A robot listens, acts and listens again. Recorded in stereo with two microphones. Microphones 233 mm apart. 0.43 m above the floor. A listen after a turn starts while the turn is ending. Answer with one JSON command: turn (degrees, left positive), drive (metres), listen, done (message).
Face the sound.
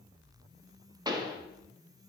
{"turn": -15}
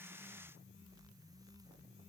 {"listen": true}
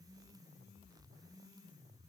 {"done": "I heard a pop, but can't make it out now. It was about straight ahead or 150° right."}